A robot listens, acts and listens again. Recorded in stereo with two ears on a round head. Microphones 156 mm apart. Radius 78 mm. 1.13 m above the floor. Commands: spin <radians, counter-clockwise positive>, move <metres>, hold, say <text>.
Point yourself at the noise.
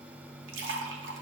spin -1.57
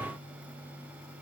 say Facing where the splash came from. I can't hear it now.